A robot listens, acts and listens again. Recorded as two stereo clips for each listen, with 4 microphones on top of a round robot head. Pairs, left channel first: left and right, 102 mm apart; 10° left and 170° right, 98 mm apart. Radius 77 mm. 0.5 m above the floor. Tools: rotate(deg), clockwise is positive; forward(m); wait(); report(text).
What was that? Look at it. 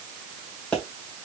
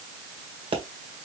rotate(-170)
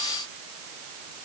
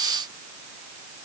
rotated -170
report("Facing where the pop came from. I can't hear it now.")